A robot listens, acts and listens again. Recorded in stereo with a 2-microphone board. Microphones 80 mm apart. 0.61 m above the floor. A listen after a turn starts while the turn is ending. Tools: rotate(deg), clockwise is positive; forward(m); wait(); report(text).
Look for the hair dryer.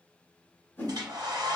rotate(55)
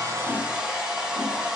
report("Found it: a hair dryer, straight ahead.")